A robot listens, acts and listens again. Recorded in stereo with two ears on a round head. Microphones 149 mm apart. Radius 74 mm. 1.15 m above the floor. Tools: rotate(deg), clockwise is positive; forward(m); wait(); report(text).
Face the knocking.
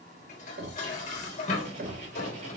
rotate(60)
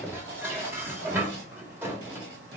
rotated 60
wait()
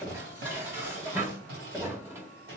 report("Found it: knocking, straight ahead, 1 to 2 m away.")